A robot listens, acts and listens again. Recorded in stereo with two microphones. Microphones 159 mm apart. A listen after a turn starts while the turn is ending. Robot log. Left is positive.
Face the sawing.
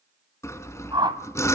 note: The sawing: about 15° left or 165° left.
cmd yaw +15
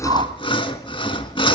note: So it is at 150° left.
cmd yaw +150
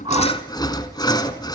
note: The sawing is now 25° left.
cmd yaw +25
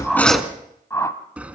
note: The sawing is now 10° right.
cmd yaw -10
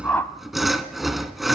end: Found it: sawing, straight ahead.